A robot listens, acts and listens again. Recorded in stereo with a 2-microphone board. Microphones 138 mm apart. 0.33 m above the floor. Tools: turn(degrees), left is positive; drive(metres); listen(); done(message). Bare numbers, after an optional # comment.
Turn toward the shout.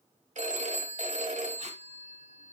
listen()
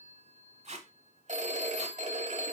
listen()
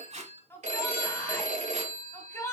# The shout: about 15° left or 165° left.
turn(15)
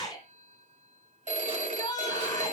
# So it is at 150° left.
turn(150)
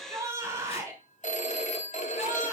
# The shout is now 25° right.
turn(-25)
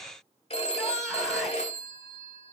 listen()
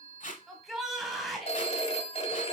done("Facing the shout, 1 to 2 m away.")